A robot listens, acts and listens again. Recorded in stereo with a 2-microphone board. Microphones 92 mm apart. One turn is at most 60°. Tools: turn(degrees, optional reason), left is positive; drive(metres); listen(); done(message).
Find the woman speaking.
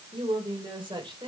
turn(degrees=-55, reason="The woman speaking: about 55° right or 125° right.")
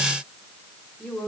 turn(degrees=10, reason="So it is at 10° left.")
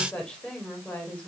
turn(degrees=10, reason="The woman speaking is now 10° left.")
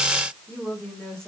turn(degrees=10, reason="The woman speaking is now 10° left.")
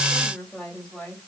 done("Found it: a woman speaking, straight ahead.")